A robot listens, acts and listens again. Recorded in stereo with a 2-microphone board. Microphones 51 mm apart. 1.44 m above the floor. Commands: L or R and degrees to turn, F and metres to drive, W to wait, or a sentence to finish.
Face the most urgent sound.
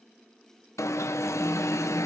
L75
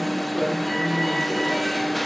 Facing the alarm.